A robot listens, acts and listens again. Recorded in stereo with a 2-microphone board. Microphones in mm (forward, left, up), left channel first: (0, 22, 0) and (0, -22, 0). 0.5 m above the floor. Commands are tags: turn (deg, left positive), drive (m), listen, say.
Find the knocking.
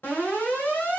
<listen/>
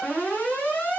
<listen/>
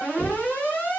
<turn deg="50"/>
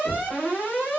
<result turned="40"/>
<turn deg="20"/>
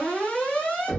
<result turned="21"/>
<say>Found it: knocking, straight ahead, 1 to 2 m away.</say>